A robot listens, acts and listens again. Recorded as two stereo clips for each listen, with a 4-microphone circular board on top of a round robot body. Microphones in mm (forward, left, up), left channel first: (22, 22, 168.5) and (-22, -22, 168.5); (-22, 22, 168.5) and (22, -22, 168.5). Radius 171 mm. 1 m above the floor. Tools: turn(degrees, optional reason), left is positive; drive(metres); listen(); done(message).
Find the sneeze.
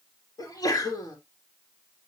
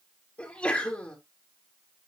turn(degrees=65, reason="The sneeze: 65° left.")
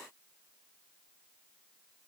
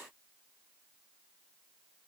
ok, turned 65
done("I heard a sneeze from this way, but can't make it out now.")